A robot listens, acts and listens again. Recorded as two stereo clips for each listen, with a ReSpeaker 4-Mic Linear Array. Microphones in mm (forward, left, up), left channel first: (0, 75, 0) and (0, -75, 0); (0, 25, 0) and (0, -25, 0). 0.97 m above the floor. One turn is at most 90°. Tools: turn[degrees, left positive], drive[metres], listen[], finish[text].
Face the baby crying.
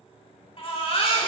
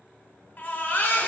Thought: The baby crying: about 40° left or 140° left.
Action: turn[40]
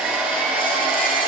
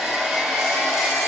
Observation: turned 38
Action: listen[]
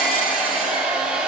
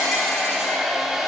Action: listen[]
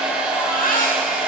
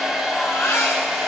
Thought: So it is at 95° left.
Action: turn[90]
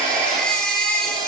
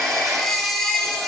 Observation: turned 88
Action: finish[Found it: a baby crying, straight ahead, 1 to 2 m away.]